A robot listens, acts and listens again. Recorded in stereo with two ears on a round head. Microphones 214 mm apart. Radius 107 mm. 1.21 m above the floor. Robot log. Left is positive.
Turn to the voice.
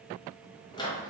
cmd idle
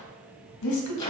cmd yaw +90
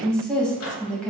end: Facing the woman speaking.